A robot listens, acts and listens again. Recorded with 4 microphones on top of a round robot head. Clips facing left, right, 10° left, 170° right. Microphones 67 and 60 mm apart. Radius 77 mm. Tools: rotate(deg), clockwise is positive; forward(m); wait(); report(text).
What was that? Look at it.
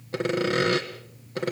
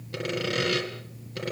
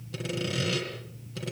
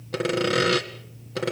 rotate(-155)
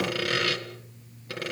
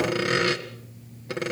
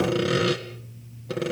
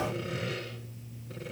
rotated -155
rotate(20)
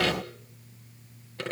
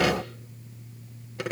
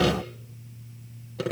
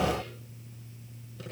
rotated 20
rotate(10)
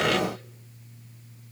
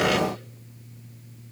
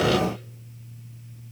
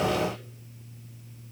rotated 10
wait()
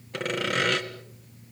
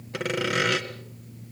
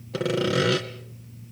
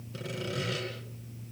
report("Found it: sawing, straight ahead, 2 to 4 m away.")